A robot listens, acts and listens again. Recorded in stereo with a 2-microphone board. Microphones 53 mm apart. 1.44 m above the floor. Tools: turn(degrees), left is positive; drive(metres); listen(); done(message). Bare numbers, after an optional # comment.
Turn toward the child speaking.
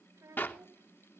# The child speaking: about 70° right or 110° right.
turn(-70)
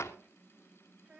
# So it is at 35° right.
turn(-35)
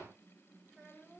# The child speaking is now 15° right.
turn(-15)
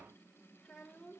done("Found it: a child speaking, straight ahead, 2 to 4 m away.")